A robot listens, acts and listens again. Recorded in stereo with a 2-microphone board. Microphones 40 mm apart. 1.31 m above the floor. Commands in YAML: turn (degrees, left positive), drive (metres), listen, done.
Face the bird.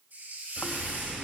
turn: -30
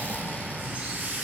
turn: -140
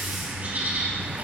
turn: -40
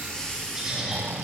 turn: -15
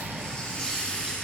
listen: true
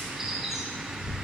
turn: -10
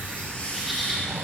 done: "Found it: a bird, straight ahead."